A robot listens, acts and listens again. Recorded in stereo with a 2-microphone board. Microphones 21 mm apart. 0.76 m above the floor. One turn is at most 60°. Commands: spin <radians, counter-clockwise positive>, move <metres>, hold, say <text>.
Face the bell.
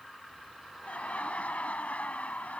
hold
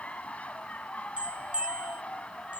spin -0.96
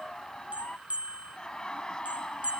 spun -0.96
spin -1.05
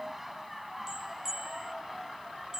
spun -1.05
spin -0.52
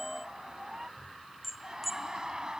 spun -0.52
say Facing the bell.